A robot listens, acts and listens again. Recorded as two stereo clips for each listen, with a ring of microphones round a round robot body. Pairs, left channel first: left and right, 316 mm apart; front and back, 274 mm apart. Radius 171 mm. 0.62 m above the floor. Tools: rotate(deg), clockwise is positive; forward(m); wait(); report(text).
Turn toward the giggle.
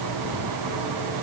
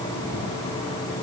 wait()
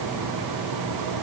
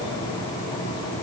wait()
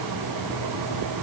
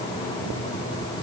report("I can't make out a giggle to turn to.")